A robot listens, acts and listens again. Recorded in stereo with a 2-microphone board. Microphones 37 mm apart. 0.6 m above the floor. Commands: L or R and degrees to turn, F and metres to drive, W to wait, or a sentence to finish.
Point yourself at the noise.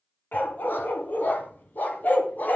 L50
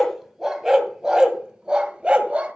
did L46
R35
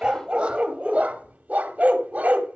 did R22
R40
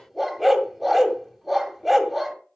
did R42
Found it: a dog barking, straight ahead, 1 to 2 m away.